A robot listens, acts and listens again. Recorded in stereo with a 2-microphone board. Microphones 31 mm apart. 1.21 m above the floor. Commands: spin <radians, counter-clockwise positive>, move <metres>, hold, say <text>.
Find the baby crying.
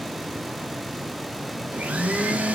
hold
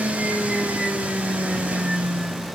hold
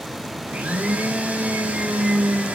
say I can't make out a baby crying to turn to.